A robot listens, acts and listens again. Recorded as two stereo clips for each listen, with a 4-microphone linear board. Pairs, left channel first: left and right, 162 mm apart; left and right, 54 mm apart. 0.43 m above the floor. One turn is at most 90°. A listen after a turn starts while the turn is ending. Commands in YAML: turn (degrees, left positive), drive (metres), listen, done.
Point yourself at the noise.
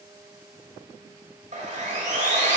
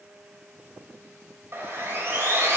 turn: -50
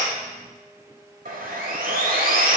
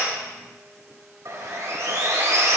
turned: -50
turn: -70
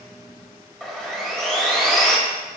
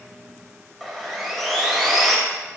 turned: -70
done: "Found it: sawing, straight ahead, 1 to 2 m away."